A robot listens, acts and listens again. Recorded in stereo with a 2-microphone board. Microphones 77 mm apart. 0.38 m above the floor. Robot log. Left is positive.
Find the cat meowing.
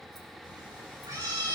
cmd yaw -90
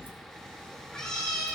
note: So it is at 10° left.
cmd yaw +10
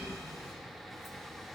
end: Facing the cat meowing.